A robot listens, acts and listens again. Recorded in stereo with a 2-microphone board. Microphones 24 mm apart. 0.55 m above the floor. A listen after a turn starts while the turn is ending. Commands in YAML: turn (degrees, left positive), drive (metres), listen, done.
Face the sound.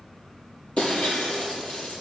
turn: 50
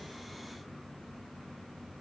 listen: true
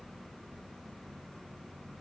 done: "I heard breaking glass, but can't make it out now. It was about straight ahead or 80° left."